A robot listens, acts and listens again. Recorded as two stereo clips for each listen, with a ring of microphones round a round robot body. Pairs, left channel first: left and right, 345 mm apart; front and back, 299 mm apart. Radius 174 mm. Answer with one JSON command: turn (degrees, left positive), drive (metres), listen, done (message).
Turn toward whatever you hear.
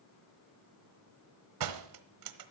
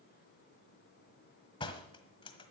{"turn": -75}
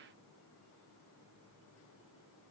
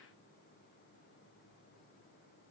{"done": "Facing where the door slam came from. I can't hear it now."}